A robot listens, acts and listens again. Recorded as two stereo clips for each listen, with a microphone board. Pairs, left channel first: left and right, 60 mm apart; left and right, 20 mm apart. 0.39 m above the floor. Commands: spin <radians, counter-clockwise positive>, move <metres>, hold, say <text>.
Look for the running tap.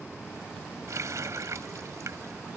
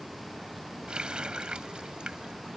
spin -1.13
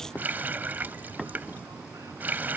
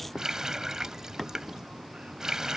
spin -0.61
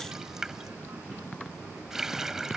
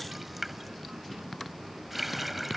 spin -0.17
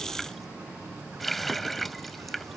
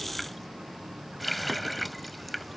say Found it: a running tap, straight ahead.